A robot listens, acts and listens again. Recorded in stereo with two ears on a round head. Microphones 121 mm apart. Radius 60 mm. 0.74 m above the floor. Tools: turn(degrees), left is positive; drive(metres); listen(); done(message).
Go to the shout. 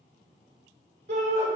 turn(degrees=-60)
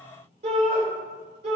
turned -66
turn(degrees=-55)
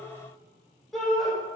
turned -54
drive(metres=1.0)
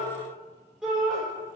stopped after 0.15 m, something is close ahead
done("Something is in my way. I am facing the shout but have not reached it.")